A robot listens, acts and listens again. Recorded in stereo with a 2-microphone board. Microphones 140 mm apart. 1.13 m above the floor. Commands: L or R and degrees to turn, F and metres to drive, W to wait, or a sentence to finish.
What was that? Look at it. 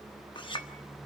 L35
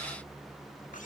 W
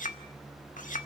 L110
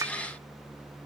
R25
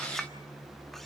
Facing the clink.